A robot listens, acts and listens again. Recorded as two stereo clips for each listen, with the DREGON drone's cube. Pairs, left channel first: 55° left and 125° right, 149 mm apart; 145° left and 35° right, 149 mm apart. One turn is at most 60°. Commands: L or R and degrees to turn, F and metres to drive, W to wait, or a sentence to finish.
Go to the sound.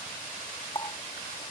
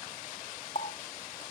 L60
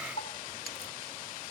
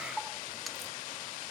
L55
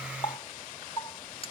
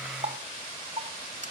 F1.0
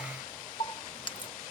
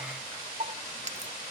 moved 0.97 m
F1.0
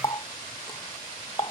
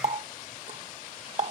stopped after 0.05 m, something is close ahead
I am next to the running tap.